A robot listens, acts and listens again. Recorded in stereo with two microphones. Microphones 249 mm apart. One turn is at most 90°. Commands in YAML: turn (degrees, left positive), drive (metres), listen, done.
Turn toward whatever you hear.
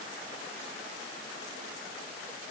listen: true
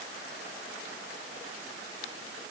listen: true
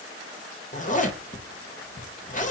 turn: 35
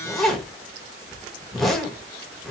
done: "Facing the zipper."